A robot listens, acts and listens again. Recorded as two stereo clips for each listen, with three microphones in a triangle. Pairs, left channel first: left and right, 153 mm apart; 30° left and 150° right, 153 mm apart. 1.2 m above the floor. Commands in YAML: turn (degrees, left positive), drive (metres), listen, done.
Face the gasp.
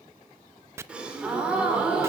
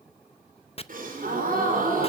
turn: -175
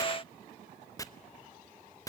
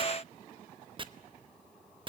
done: "I heard a gasp from this way, but can't make it out now."